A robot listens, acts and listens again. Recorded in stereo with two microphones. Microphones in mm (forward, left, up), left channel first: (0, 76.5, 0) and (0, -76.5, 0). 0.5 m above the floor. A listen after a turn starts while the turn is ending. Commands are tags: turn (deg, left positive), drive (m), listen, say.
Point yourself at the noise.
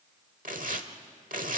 <turn deg="-70"/>
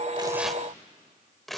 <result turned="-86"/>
<say>Facing the tearing paper, 1 to 2 m away.</say>